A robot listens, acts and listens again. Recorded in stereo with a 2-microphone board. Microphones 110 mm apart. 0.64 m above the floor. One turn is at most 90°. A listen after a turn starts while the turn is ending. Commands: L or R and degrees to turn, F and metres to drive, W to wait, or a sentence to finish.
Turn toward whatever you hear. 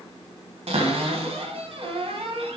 R70
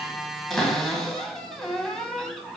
Facing the cupboard door.